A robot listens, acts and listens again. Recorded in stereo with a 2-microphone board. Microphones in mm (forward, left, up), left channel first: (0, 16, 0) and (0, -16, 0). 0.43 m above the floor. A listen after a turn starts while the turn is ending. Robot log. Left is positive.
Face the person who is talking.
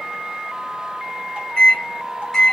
cmd idle
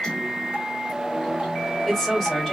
cmd yaw +30
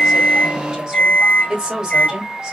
note: So it is at 30° right.
cmd yaw -30
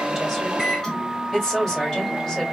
note: The woman speaking is now 10° left.
cmd yaw +10
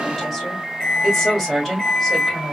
end: Found it: a woman speaking, straight ahead, 1 to 2 m away.